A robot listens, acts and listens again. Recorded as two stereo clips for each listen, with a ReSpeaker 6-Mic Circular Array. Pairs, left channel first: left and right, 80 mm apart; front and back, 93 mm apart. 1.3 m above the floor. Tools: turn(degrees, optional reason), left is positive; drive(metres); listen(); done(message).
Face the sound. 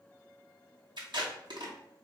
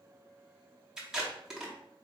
turn(degrees=-95, reason="The tape being pulled: 95° right.")
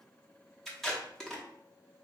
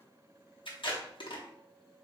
done("Facing the tape being pulled.")